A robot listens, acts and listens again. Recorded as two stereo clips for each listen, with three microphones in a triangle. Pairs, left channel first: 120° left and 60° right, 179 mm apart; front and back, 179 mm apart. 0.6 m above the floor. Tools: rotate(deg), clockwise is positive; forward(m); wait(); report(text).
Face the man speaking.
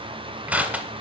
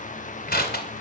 wait()
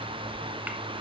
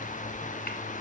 wait()
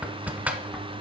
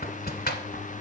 report("I can't make out a man speaking, only crushing.")